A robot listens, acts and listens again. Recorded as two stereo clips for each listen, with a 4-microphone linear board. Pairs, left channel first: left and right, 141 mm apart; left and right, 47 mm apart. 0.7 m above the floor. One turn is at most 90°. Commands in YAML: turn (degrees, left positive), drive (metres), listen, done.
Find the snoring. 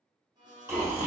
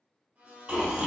turn: -20
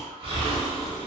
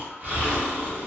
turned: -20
turn: -90
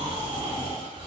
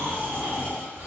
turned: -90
turn: -35
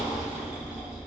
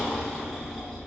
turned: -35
done: "Found it: snoring, straight ahead."